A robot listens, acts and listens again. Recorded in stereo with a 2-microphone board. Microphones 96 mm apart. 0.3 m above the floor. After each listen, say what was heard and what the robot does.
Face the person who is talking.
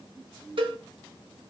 Keep listening.
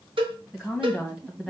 Turn 30° right.
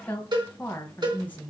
So it is at 20° left. Turn 20° left.
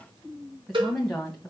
Found it: a woman speaking, straight ahead, 1 to 2 m away.